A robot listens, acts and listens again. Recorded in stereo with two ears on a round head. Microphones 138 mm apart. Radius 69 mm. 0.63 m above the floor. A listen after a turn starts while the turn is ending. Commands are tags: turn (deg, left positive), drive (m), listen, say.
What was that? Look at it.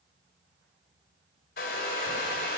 <turn deg="70"/>
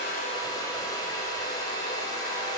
<turn deg="30"/>
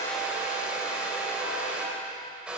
<say>Found it: a hair dryer, straight ahead.</say>